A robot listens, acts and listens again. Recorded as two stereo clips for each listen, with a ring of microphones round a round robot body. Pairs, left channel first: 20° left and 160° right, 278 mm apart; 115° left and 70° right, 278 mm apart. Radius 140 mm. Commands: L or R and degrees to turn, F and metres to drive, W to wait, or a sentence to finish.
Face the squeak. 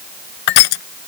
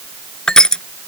W
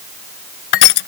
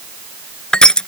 W
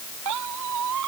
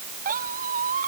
R130
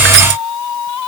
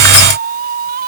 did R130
Facing the squeak.